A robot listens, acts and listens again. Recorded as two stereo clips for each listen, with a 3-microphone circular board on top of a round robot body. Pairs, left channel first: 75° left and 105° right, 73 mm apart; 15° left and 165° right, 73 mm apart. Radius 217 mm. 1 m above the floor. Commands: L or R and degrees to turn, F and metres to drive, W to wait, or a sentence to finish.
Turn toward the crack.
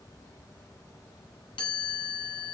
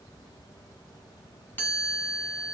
W
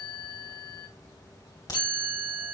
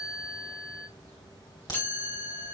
L40
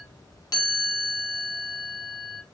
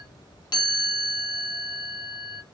I heard a crack from this way, but can't make it out now.